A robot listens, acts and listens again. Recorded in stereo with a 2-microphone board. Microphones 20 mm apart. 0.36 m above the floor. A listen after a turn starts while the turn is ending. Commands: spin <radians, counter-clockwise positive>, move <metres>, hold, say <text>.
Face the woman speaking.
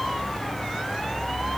hold
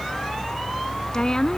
spin 0.52
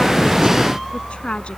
spin 2.09
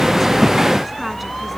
hold
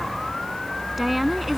say Facing the woman speaking.